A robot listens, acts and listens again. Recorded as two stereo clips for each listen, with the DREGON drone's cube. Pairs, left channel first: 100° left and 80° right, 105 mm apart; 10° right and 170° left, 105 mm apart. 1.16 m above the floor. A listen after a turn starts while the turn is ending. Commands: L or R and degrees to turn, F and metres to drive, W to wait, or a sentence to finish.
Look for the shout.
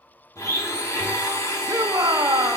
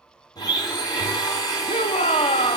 R15
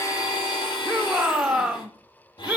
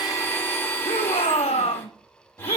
Facing the shout.